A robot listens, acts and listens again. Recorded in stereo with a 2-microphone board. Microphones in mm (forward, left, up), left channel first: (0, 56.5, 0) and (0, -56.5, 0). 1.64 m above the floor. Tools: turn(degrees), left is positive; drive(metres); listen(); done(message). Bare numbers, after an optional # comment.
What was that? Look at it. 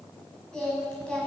turn(30)
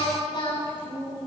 # So it is at 135° left.
turn(135)
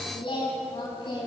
# The singing is now 45° left.
turn(45)
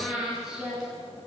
done("Found it: singing, straight ahead, over 4 m away.")